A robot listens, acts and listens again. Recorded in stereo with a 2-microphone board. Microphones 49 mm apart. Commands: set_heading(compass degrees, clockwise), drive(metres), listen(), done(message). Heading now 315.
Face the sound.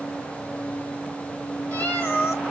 set_heading(275)
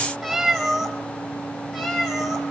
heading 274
done("Facing the cat meowing.")